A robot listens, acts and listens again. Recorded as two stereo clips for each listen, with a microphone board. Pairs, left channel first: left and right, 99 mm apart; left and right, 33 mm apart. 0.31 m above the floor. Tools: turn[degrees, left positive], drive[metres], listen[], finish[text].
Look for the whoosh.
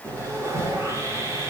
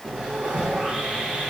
Thought: The whoosh: about 45° right or 135° right.
Action: turn[-45]
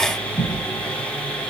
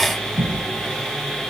Thought: So it is at 85° right.
Action: turn[-85]
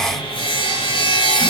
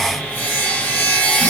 Action: listen[]
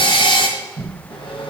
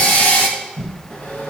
Action: finish[Facing the whoosh, 2 to 4 m away.]